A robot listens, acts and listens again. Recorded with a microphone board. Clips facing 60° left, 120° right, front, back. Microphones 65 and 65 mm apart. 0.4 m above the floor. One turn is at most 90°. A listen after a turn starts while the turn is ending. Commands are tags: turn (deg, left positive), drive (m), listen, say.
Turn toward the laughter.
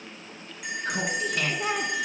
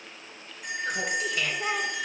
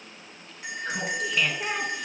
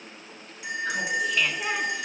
<turn deg="90"/>
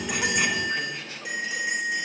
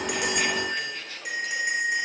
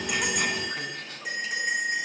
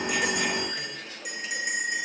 <turn deg="-10"/>
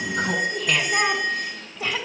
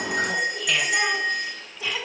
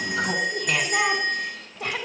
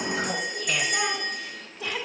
<turn deg="20"/>
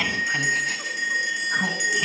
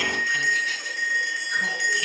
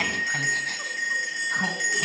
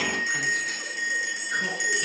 <listen/>
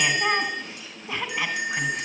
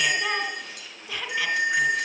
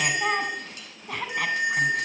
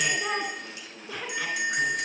<say>Facing the laughter.</say>